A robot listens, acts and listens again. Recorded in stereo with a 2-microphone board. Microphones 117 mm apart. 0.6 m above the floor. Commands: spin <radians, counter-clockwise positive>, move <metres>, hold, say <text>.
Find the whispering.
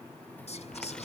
spin 1.13
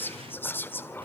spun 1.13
spin 0.35
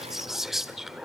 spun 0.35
say Facing the whispering, 1 to 2 m away.